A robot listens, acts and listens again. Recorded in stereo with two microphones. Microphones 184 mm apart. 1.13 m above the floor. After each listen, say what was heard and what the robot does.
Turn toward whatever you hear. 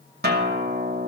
The guitar: about 65° right or 115° right. Turn 65° right.
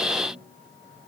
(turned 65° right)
Keep listening.
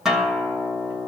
Facing the guitar, 1 to 2 m away.